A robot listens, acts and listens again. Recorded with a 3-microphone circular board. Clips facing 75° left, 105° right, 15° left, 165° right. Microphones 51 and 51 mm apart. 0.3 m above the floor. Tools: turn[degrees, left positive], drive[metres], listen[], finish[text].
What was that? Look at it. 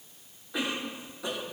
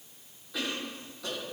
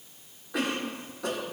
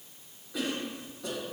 Action: finish[Found it: a cough, straight ahead, 2 to 4 m away.]